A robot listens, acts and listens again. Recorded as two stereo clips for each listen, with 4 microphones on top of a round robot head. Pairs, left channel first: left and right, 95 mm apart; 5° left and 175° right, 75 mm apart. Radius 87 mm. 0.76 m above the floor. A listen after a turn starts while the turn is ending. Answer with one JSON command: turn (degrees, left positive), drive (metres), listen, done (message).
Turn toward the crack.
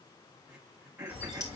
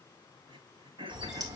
{"turn": 150}
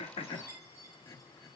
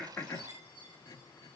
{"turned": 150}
{"done": "Facing where the crack came from. I can't hear it now."}